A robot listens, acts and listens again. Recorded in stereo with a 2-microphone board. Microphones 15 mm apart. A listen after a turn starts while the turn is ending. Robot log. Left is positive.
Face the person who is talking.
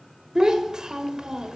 note: The child speaking: about 45° right or 135° right.
cmd yaw -45
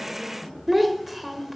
end: Found it: a child speaking, straight ahead, 1 to 2 m away.